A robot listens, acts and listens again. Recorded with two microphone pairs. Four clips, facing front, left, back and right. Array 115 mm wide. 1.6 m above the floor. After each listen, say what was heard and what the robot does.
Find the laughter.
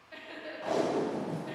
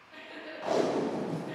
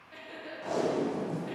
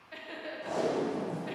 The laughter: 75° right. Turn 75° right.
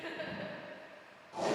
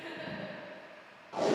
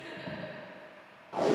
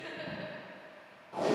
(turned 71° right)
The laughter is now 30° right. Turn 30° right.
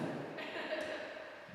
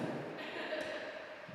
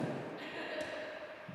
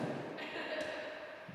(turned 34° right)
The laughter is now 25° right. Turn 25° right.
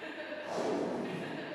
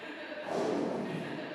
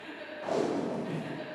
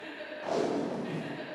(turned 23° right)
The laughter is now 15° right. Turn 15° right.
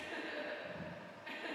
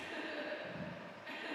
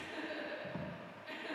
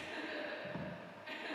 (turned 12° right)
Found it: laughter, straight ahead, 2 to 4 m away.